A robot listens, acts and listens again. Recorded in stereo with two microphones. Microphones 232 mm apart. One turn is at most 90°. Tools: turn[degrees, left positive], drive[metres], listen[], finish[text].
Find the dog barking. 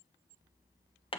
Action: listen[]
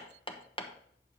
Action: listen[]
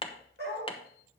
Thought: The dog barking: about 50° right or 130° right.
Action: turn[-50]
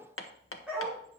Action: finish[Found it: a dog barking, straight ahead.]